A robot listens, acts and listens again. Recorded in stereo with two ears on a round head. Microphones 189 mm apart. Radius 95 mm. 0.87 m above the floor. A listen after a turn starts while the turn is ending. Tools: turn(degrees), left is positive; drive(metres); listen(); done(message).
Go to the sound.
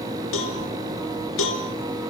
turn(degrees=70)
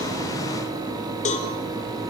turn(degrees=35)
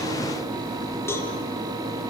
listen()
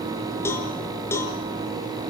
turn(degrees=10)
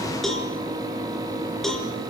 drive(metres=1.0)
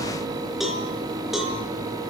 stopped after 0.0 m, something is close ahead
done("Blocked. The cowbell is further on, straight ahead.")